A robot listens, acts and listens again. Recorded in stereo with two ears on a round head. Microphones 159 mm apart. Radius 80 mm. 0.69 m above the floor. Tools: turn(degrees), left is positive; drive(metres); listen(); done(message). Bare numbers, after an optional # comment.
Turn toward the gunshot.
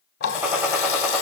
turn(-30)
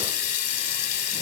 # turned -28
listen()
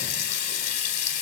done("I heard a gunshot, but can't make it out now. It was about 15° left or 140° right.")